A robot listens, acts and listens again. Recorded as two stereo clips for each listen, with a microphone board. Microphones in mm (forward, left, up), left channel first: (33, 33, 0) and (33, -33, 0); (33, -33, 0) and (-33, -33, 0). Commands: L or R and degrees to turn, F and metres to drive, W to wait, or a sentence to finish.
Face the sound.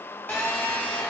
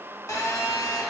L30
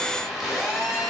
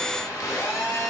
Found it: a phone buzzing, straight ahead.